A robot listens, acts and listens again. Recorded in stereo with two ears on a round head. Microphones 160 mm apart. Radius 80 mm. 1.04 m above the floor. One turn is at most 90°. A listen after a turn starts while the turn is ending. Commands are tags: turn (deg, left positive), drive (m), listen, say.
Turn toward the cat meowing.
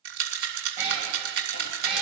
<turn deg="-30"/>
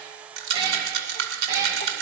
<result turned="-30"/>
<turn deg="-15"/>
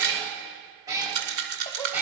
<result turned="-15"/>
<turn deg="-30"/>
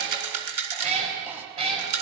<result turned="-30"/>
<turn deg="-90"/>
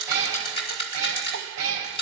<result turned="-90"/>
<turn deg="-75"/>
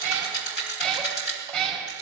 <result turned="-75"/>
<say>Facing the cat meowing.</say>